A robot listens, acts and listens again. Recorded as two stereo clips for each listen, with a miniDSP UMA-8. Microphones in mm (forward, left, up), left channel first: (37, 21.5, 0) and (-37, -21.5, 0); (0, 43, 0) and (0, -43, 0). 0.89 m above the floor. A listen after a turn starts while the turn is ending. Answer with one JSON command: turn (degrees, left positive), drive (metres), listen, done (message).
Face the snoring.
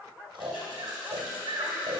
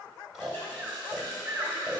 {"turn": -175}
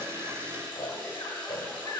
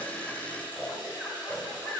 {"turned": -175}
{"done": "Found it: snoring, straight ahead."}